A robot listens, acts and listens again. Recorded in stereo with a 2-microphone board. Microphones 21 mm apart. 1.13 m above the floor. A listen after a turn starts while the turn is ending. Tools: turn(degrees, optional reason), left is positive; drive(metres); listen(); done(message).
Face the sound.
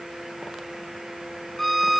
turn(degrees=30)
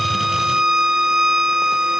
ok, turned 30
turn(degrees=-25, reason="So it is at 25° right.")
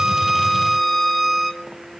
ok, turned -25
done("Found it: a violin, straight ahead, 2 to 4 m away.")